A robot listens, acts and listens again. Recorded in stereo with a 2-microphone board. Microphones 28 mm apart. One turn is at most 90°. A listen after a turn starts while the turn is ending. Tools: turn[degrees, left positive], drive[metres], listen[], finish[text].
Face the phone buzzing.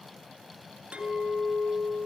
Action: listen[]
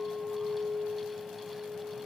Action: listen[]
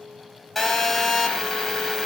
Action: turn[30]
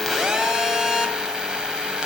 Thought: So it is at 25° right.
Action: turn[-25]
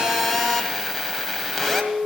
Action: finish[Facing the phone buzzing, 2 to 4 m away.]